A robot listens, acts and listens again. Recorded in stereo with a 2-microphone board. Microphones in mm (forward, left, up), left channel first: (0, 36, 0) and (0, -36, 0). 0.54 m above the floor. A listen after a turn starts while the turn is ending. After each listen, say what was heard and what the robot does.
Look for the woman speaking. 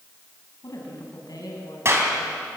The woman speaking: about 65° left or 115° left. Turn 65° left.
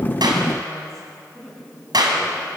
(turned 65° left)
So it is at 10° left. Turn 10° left.
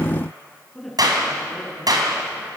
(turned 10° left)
Facing the woman speaking.